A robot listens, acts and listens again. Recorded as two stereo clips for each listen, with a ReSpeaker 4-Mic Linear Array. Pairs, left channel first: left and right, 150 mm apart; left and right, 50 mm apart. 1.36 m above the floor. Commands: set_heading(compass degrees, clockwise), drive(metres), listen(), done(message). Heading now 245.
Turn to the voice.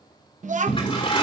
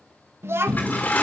set_heading(300)
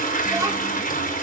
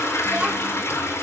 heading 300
listen()
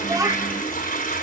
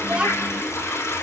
set_heading(330)
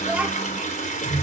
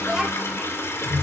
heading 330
set_heading(340)
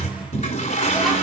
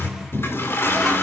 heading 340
listen()
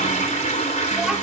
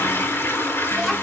listen()
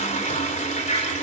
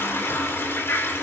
done("I heard a child speaking from this way, but can't make it out now.")